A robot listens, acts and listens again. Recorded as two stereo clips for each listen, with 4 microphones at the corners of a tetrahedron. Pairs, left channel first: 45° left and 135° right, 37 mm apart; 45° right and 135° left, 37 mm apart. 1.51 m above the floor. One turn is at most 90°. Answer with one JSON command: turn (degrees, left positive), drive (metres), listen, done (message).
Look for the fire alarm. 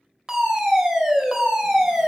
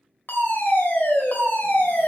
{"turn": -65}
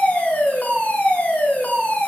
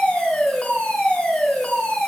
{"done": "Found it: a fire alarm, straight ahead."}